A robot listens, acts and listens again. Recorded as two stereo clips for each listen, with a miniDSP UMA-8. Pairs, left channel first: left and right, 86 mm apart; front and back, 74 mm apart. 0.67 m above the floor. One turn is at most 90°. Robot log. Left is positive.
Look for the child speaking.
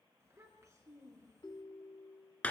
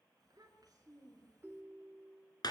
note: The child speaking: 145° right.
cmd yaw -90
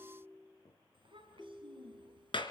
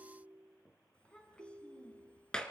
note: The child speaking is now 75° right.
cmd yaw -75
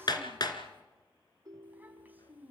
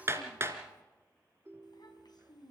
note: The child speaking is now 20° right.
cmd yaw -20
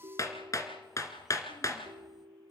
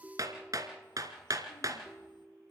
cmd idle
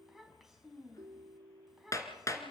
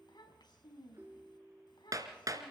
end: Found it: a child speaking, straight ahead, 2 to 4 m away.